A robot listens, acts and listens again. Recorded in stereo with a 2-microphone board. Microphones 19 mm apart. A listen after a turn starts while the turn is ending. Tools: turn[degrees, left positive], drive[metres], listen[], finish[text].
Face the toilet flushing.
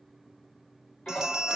Thought: The toilet flushing: about 70° left or 110° left.
Action: turn[70]
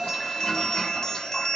Thought: So it is at 40° left.
Action: turn[40]
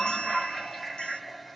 Action: finish[Facing the toilet flushing, 2 to 4 m away.]